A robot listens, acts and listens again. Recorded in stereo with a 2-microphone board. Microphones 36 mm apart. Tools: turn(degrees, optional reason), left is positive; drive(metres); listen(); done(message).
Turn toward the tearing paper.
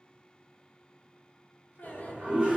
listen()
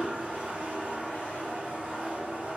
listen()
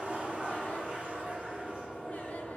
done("I can't make out tearing paper to turn to.")